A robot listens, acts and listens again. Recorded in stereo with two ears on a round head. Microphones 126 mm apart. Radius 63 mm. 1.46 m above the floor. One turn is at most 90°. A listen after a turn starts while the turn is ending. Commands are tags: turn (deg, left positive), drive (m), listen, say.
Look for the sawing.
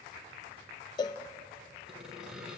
<turn deg="-30"/>
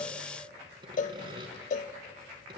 <turn deg="-90"/>
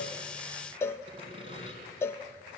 <turn deg="-45"/>
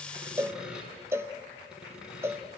<say>Found it: sawing, straight ahead, 2 to 4 m away.</say>